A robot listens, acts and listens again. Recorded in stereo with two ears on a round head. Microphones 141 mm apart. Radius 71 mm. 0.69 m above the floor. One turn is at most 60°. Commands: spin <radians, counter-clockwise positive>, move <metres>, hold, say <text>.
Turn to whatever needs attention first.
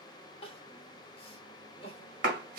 spin 0.61
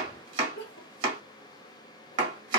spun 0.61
spin 1.05
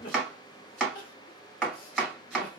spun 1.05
spin 1.05
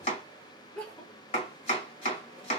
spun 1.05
spin 0.17
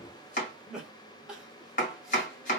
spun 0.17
say Found it: crying, straight ahead, under 1 m away.